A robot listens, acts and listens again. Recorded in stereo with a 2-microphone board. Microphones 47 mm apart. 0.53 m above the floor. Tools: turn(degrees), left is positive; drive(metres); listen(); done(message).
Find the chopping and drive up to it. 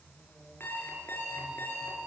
listen()
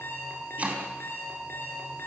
turn(degrees=-30)
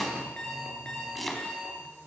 drive(metres=1.0)
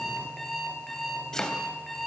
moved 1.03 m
turn(degrees=15)
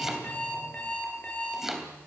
drive(metres=1.0)
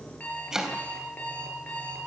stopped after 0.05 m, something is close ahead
turn(degrees=-10)
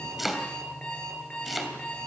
done("Something is in my way. I am facing the chopping but have not reached it.")